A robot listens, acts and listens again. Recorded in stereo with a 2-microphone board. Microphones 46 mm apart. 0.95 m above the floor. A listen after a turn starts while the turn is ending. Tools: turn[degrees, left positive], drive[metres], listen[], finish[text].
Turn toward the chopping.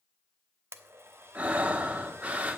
Action: listen[]
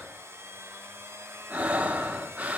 Action: listen[]
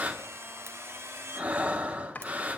Thought: The chopping: about 35° left or 145° left.
Action: turn[35]
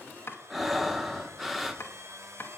Thought: So it is at 105° left.
Action: turn[105]
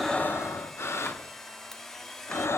Action: listen[]
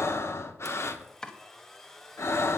Thought: The chopping is now 15° left.
Action: turn[15]
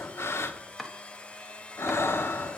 Action: finish[Found it: chopping, straight ahead, 1 to 2 m away.]